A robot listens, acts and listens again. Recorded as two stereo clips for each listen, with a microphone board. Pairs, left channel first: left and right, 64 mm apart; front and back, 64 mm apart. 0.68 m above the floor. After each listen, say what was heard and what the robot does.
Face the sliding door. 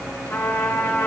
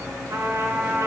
Keep listening.
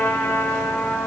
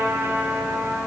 Keep listening.
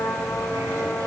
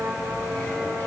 I can't make out a sliding door, only a trumpet.